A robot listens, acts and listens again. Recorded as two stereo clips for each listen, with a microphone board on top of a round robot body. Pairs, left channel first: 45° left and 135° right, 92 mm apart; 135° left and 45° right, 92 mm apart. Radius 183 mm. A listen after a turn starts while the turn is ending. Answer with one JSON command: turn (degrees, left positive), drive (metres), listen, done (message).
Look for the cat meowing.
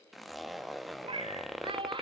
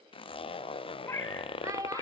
{"turn": -170}
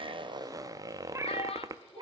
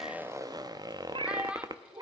{"turn": -95}
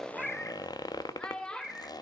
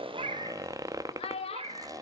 {"turn": -40}
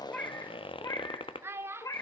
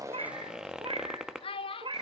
{"turn": -10}
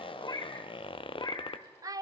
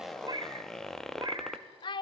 {"done": "Found it: a cat meowing, straight ahead, 1 to 2 m away."}